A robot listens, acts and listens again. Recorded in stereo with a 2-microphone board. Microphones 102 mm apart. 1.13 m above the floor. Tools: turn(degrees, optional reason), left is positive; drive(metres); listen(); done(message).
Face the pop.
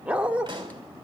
turn(degrees=-45, reason="The pop: about 45° right or 135° right.")
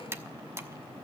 listen()
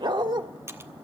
done("I heard a pop, but can't make it out now. It was about straight ahead or 90° right.")